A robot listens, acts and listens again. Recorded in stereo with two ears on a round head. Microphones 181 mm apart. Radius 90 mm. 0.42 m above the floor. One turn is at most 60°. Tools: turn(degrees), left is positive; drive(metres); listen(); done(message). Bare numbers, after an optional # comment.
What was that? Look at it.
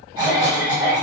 # The cough: about 20° right or 160° right.
turn(-20)
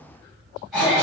done("Facing the cough, 1 to 2 m away.")